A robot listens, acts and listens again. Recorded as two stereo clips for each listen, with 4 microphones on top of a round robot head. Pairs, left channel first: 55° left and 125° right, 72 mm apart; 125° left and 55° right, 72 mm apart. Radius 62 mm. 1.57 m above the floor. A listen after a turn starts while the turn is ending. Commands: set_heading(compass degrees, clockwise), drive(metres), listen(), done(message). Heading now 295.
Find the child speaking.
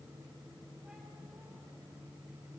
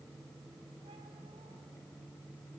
listen()
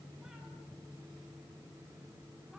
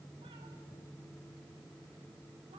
listen()
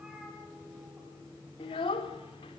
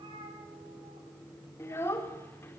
set_heading(230)
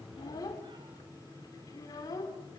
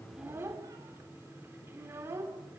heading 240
set_heading(230)
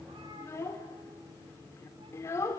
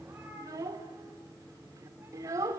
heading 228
done("Facing the child speaking.")